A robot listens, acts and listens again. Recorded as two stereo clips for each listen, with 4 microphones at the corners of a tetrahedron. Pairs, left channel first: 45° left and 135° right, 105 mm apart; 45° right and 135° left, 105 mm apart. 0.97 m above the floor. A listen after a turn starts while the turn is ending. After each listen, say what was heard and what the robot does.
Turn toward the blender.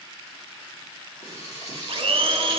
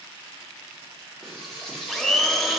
The blender: 135° right. Turn 135° right.
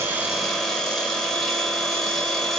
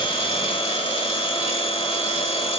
The blender is now 45° right. Turn 45° right.
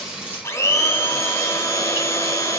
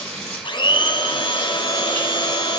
The blender is now 15° right. Turn 15° right.
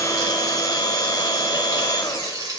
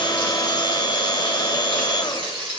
Found it: a blender, straight ahead, under 1 m away.